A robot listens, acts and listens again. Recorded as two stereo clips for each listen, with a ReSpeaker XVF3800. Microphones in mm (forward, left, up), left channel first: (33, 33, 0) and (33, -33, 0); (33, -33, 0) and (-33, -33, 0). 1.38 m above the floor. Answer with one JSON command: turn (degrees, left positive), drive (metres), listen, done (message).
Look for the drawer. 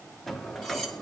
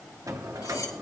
{"turn": 175}
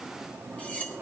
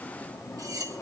{"turn": -30}
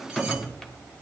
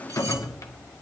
{"done": "Found it: a drawer, straight ahead."}